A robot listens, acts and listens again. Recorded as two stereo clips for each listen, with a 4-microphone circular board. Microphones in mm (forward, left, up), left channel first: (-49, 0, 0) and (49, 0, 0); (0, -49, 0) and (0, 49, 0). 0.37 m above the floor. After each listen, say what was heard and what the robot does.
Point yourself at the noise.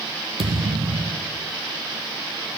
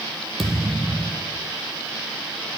Facing the thud, 2 to 4 m away.